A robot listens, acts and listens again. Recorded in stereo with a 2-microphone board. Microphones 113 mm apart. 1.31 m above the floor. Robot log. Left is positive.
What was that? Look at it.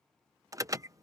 note: The alarm: about 30° right or 150° right.
cmd yaw -30
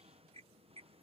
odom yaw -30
note: So it is at 120° right.
cmd yaw -120
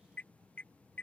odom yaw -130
note: The alarm is now 10° left.
cmd yaw +10
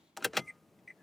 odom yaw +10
end: Found it: an alarm, straight ahead.